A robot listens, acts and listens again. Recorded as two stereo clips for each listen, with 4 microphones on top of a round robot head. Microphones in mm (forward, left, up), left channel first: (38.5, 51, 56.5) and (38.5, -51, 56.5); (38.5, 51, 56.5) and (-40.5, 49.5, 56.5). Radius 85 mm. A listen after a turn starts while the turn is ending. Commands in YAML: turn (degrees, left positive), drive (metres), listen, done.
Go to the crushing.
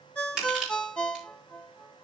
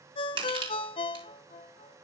turn: -175
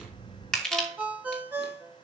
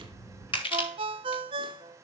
drive: 1.0
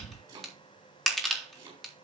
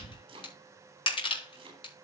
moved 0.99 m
drive: 1.0
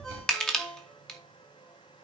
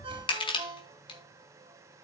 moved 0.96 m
drive: 1.0
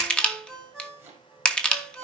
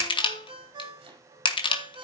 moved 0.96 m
turn: 10
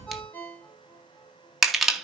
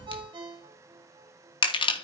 drive: 1.0
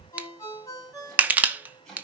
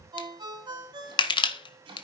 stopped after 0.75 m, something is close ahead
turn: -15
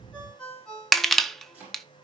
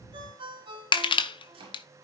done: "I am next to the crushing."